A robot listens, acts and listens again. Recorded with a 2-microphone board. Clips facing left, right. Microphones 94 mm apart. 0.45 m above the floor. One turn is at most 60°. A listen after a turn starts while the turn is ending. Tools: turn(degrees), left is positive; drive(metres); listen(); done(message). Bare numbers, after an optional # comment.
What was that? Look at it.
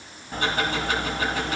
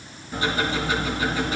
# The ticking: about 60° left or 120° left.
turn(60)
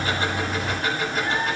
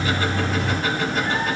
done("Found it: ticking, straight ahead.")